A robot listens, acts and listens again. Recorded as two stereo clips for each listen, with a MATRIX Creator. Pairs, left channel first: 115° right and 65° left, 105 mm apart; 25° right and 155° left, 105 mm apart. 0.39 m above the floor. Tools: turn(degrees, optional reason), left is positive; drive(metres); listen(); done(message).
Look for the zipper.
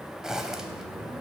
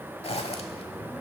turn(degrees=-15, reason="The zipper: 15° right.")
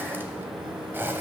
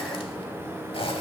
done("Found it: a zipper, straight ahead.")